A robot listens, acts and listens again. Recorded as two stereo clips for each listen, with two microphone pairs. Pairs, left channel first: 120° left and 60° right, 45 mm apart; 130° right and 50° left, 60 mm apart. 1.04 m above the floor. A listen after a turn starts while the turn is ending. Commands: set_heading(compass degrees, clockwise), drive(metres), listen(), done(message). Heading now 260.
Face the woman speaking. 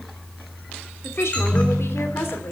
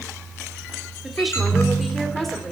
set_heading(120)
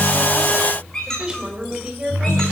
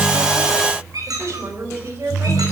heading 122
set_heading(107)
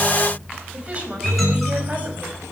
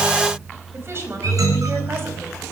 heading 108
done("Facing the woman speaking.")